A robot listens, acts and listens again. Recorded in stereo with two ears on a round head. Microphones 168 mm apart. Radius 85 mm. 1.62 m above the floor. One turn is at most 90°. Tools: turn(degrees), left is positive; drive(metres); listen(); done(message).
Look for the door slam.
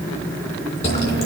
listen()
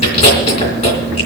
listen()
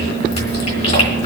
done("I can't make out a door slam to turn to.")